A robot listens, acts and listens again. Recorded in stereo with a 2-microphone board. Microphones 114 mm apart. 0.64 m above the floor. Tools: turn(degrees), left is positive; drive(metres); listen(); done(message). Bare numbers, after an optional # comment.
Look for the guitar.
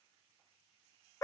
listen()
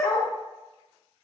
listen()
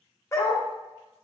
done("I can't make out a guitar, only a dog barking.")